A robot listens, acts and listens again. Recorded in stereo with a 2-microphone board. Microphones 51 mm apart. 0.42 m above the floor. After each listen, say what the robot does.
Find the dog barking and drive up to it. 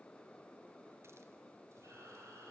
Keep listening.
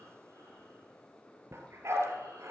Turn 55° right.
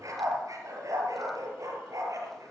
Turn 70° right.
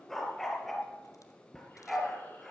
Drive 1.0 m forward.
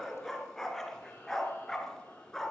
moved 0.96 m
Drive 1.0 m forward.
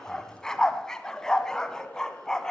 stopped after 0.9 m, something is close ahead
Turn 10° left.
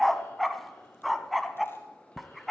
I am next to the dog barking.